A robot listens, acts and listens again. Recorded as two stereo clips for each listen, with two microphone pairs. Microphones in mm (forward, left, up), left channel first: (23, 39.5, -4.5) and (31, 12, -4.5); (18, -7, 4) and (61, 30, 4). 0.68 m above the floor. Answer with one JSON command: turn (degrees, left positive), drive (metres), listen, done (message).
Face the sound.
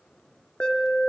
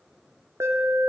{"turn": 65}
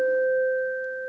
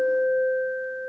{"turn": 10}
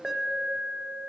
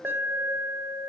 {"done": "Facing the alarm, 1 to 2 m away."}